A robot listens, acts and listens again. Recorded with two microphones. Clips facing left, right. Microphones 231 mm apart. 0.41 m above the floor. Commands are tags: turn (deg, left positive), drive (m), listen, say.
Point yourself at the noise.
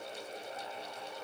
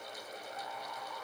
<listen/>
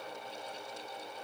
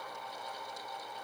<listen/>
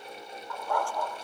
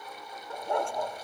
<turn deg="-20"/>
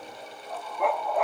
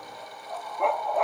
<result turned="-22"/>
<say>Found it: a dog barking, straight ahead.</say>